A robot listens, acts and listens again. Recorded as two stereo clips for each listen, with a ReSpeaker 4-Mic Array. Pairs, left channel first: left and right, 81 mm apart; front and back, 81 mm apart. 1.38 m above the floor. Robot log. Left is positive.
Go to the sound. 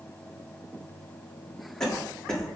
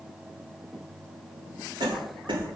note: The cough: 170° left.
cmd yaw +170
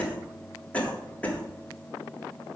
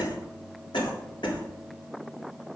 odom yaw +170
note: The cough is now 15° left.
cmd yaw +15
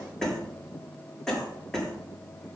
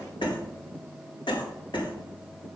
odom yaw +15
cmd fwd 1.0
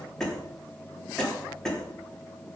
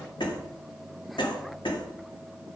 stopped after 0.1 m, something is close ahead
end: Blocked. The cough is further on, straight ahead.